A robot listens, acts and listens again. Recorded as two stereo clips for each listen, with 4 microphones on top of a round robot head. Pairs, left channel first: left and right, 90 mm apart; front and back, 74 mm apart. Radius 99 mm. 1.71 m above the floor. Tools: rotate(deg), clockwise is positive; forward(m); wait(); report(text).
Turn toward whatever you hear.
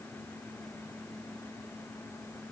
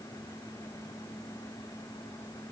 wait()
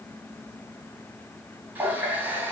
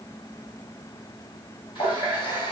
rotate(20)
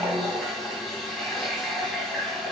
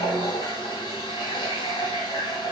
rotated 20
report("Facing the running tap.")